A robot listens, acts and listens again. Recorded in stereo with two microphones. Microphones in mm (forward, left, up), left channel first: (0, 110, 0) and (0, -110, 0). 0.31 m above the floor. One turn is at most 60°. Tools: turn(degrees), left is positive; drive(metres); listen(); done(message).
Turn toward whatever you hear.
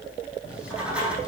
turn(degrees=-30)
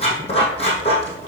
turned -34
turn(degrees=25)
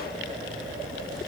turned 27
done("Facing the writing, 2 to 4 m away.")